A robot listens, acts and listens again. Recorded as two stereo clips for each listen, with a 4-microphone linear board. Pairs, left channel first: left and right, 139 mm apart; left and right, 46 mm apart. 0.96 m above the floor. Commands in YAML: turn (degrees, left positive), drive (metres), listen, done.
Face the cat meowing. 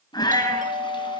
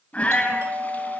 turn: 30
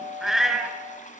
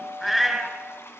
done: "Found it: a cat meowing, straight ahead, 2 to 4 m away."